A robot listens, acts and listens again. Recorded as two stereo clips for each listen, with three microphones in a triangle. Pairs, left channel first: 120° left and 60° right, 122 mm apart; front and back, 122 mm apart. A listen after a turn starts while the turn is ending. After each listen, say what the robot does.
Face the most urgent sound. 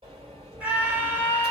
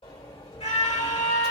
Turn 15° left.
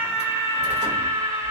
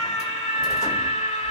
Found it: a scream, straight ahead.